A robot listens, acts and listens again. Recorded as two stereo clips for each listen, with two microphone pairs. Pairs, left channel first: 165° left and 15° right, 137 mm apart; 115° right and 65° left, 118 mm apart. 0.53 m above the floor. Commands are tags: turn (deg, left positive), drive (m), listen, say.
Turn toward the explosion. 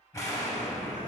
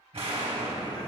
<turn deg="100"/>
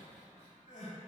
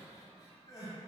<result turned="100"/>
<say>I heard an explosion from this way, but can't make it out now.</say>